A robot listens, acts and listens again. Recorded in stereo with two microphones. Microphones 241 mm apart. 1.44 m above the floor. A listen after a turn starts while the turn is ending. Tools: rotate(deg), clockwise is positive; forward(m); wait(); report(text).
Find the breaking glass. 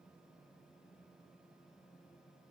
wait()
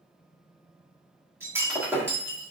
rotate(30)
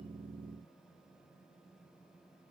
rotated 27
wait()
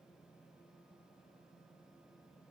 report("I heard breaking glass, but can't make it out now. It was about 15° left or 145° right.")